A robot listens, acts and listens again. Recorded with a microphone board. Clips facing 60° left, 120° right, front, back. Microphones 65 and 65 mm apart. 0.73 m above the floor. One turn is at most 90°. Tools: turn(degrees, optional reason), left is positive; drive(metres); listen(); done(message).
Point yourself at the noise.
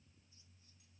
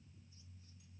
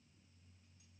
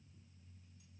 listen()
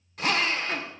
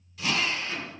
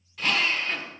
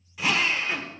turn(degrees=90, reason="The drill: 100° left.")
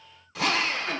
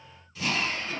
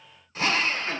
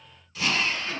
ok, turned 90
turn(degrees=50, reason="The drill is now 50° left.")
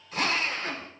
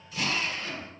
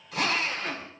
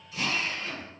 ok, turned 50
turn(degrees=20, reason="The drill is now 20° left.")
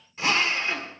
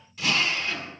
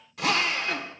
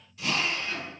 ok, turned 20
done("Found it: a drill, straight ahead, 1 to 2 m away.")